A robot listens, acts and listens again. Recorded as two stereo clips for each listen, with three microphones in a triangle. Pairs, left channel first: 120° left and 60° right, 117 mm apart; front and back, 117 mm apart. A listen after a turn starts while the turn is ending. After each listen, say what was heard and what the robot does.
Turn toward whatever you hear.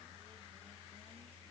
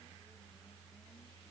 Keep listening.
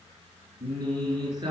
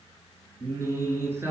The singing: 110° right. Turn 110° right.
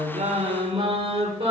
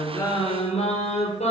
The singing is now 25° right. Turn 25° right.
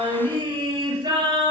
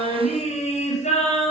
The singing is now 10° right. Turn 10° right.
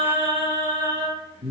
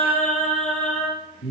Found it: singing, straight ahead, over 4 m away.